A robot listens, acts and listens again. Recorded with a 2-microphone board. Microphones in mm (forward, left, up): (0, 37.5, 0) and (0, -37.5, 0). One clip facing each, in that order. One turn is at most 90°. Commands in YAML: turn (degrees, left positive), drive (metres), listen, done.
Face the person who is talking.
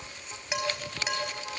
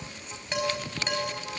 listen: true
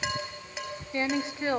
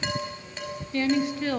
turn: 25
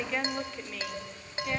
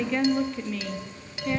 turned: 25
done: "Facing the woman speaking, 1 to 2 m away."